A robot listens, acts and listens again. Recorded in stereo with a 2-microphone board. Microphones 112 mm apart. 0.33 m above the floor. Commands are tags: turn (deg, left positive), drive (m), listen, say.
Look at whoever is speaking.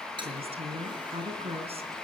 <turn deg="-60"/>
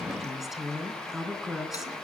<say>Facing the woman speaking.</say>